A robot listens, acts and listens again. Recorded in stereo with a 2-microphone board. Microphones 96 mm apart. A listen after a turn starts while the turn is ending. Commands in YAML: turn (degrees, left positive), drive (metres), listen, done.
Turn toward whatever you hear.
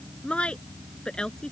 turn: 30
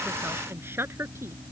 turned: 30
turn: -25
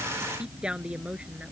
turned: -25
turn: -10
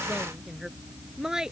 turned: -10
done: "Found it: a woman speaking, straight ahead."